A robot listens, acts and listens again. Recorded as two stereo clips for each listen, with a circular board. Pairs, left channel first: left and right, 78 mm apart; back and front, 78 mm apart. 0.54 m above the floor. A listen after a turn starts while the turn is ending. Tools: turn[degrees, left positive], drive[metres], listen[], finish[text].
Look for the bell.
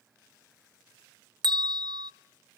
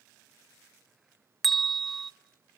Thought: The bell: 95° right.
Action: turn[-95]
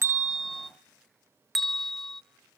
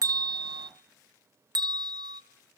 Action: finish[Facing the bell.]